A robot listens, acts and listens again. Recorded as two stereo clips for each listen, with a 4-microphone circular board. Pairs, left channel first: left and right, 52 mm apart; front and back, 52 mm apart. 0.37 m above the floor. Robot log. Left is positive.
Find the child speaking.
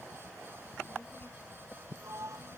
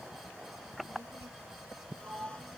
note: The child speaking: 140° left.
cmd yaw +140
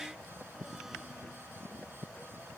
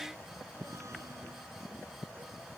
cmd idle
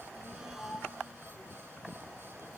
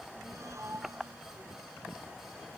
note: The child speaking is now 40° left.
cmd yaw +40
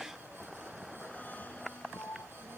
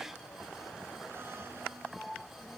cmd idle
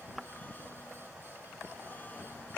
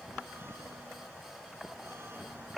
cmd idle
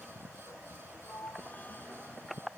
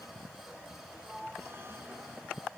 end: Facing where the child speaking came from. I can't hear it now.